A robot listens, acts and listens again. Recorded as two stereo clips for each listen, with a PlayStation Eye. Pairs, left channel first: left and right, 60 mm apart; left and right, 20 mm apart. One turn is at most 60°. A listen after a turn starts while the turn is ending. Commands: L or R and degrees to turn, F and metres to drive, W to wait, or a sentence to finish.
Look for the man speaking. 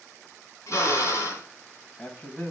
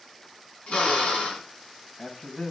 L25
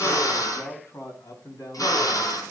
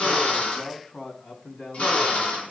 L60
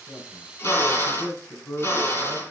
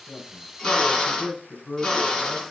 L45
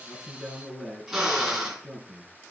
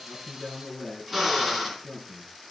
Facing the man speaking, over 4 m away.